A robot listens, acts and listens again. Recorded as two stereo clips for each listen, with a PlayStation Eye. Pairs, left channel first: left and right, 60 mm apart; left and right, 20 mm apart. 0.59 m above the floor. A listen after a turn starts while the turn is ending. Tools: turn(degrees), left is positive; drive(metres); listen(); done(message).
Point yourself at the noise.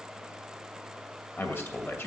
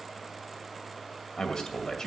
turn(degrees=40)
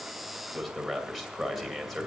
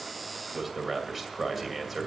done("Found it: a man speaking, straight ahead.")